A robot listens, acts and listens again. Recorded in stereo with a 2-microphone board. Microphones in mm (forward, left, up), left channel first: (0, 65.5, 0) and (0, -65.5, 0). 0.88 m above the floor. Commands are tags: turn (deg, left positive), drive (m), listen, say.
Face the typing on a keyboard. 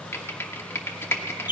<turn deg="20"/>
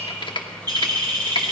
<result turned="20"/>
<turn deg="140"/>
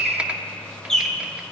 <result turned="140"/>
<turn deg="-10"/>
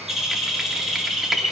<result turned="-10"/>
<listen/>
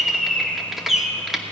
<say>Found it: typing on a keyboard, straight ahead.</say>